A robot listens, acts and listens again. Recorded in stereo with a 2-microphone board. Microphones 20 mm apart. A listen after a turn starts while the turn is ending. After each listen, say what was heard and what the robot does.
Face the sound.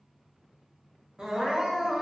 The crying: about 55° right or 125° right. Turn 55° right.
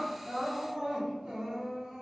So it is at 60° right. Turn 60° right.
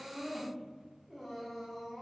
The crying is now 10° right. Turn 10° right.
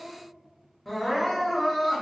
Facing the crying.